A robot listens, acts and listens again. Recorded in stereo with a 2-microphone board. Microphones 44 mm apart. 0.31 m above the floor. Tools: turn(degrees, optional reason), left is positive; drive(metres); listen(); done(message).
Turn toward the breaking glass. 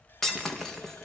turn(degrees=30)
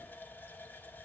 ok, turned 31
listen()
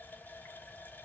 done("I heard breaking glass, but can't make it out now. It was about 20° right or 140° left.")